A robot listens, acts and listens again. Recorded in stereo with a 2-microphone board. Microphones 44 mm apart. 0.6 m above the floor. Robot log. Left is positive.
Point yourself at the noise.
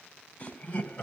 note: The laughter: about 40° left or 140° left.
cmd yaw +40
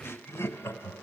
note: So it is at 100° left.
cmd yaw +100
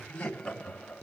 note: The laughter is now 20° left.
cmd yaw +20
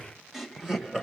note: The laughter is now 10° right.
cmd yaw -10
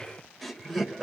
end: Found it: laughter, straight ahead.